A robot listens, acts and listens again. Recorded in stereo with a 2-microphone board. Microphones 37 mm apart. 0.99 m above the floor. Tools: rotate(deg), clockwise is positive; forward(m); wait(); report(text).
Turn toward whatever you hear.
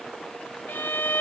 rotate(-90)
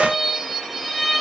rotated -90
report("Facing the violin, 1 to 2 m away.")